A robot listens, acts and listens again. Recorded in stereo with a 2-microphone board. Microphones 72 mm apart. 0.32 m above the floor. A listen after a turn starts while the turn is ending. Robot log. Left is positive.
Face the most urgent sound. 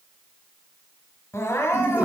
note: The crying: about 40° left or 140° left.
cmd yaw +40
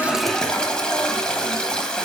cmd idle
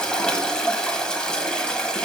cmd idle
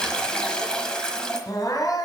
note: So it is at 90° left.
cmd yaw +90
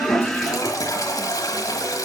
cmd idle
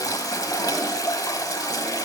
cmd idle
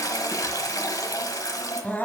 note: The crying is now 25° left.
cmd yaw +25
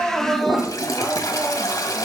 end: Found it: crying, straight ahead, 1 to 2 m away.